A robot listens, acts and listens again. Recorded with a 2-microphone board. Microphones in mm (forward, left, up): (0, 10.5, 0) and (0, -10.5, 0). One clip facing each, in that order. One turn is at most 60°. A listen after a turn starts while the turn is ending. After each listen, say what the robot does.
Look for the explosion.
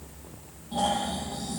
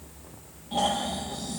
Keep listening.
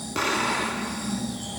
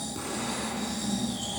Turn 60° left.
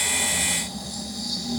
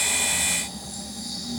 Keep listening.
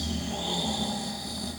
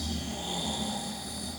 I heard an explosion, but can't make it out now. It was about straight ahead or 60° left.